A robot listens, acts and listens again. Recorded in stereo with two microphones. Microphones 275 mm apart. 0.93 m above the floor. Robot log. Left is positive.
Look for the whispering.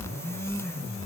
cmd idle
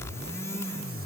cmd idle
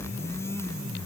end: I can't make out whispering.